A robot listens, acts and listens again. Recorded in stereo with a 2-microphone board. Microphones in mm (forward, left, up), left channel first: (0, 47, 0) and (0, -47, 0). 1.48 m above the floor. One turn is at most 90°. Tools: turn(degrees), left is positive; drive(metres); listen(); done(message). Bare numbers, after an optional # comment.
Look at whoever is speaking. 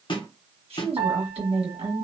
turn(-90)
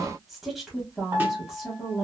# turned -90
done("Facing the woman speaking.")